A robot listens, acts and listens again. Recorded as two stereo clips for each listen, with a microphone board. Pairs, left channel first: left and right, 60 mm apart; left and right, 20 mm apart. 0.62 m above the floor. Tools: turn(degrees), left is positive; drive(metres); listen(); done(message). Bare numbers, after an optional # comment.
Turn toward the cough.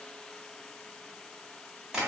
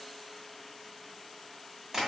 listen()
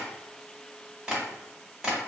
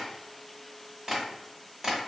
listen()
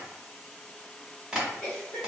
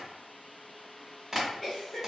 # The cough: about 30° left or 150° left.
turn(30)
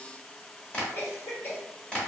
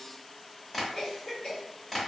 # So it is at 115° left.
turn(115)
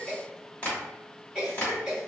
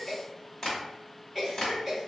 # The cough is now 20° right.
turn(-20)
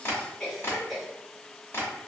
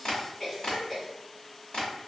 done("Facing the cough, 1 to 2 m away.")